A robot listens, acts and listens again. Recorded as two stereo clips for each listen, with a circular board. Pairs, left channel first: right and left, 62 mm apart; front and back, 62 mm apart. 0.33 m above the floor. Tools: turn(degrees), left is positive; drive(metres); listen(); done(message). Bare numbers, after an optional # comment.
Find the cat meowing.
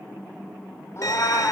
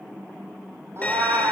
# The cat meowing: 135° right.
turn(-135)
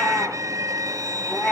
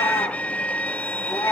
# The cat meowing is now 15° right.
turn(-15)
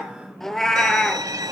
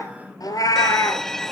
# The cat meowing is now 10° right.
turn(-10)
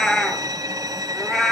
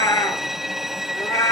done("Found it: a cat meowing, straight ahead.")